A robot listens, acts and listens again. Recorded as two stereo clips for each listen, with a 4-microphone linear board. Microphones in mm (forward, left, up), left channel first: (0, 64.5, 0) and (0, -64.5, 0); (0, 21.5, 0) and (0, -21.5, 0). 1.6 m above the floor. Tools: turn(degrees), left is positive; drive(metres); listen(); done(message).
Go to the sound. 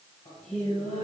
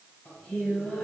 turn(degrees=55)
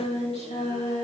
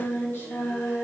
turn(degrees=60)
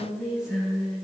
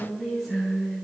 drive(metres=1.0)
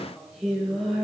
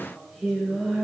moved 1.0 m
drive(metres=1.0)
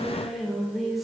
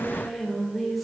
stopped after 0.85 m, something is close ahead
done("I am next to the singing.")